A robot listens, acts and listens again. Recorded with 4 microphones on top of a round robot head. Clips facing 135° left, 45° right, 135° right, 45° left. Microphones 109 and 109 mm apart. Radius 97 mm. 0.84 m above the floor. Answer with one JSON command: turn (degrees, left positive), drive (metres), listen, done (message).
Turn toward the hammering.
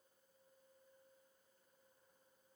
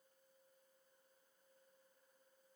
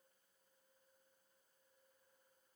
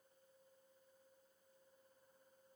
{"listen": true}
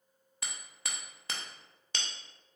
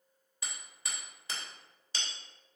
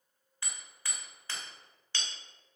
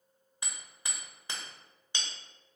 {"turn": 115}
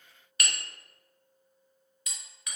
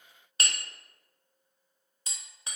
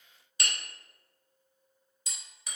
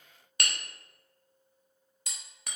{"turn": 15}
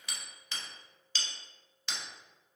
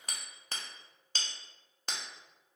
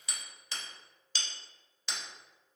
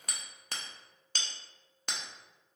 {"done": "Found it: hammering, straight ahead, under 1 m away."}